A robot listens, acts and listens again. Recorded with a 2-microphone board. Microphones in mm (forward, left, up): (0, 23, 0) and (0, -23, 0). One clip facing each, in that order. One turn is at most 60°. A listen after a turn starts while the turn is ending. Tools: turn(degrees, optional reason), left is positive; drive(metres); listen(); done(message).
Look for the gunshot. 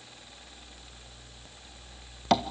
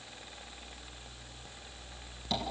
listen()
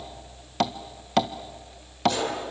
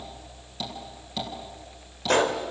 turn(degrees=-50, reason="The gunshot: about 50° right or 130° right.")
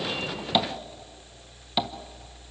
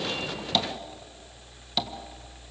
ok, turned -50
listen()
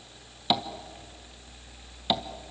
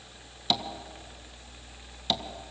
done("I heard a gunshot, but can't make it out now. It was about straight ahead or 80° right.")